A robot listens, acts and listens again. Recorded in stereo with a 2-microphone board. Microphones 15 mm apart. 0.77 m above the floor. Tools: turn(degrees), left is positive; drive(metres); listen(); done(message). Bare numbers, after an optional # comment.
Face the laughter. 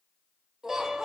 # The laughter: about 30° right or 150° right.
turn(-30)
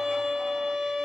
listen()
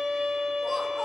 listen()
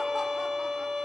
done("I heard laughter, but can't make it out now. It was about straight ahead or 120° right.")